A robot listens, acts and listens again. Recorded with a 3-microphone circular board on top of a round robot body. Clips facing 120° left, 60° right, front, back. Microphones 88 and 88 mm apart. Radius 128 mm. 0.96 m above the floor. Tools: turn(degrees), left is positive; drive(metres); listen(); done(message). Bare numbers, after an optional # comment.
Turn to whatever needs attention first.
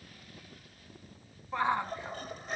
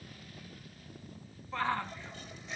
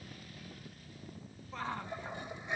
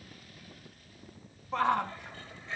# The shout: 165° right.
turn(-165)
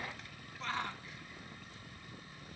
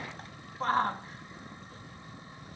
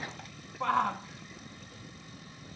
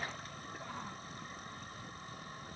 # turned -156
# The shout is now 10° right.
turn(-10)
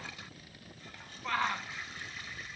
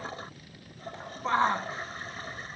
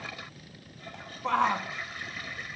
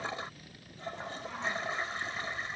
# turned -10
done("Found it: a shout, straight ahead.")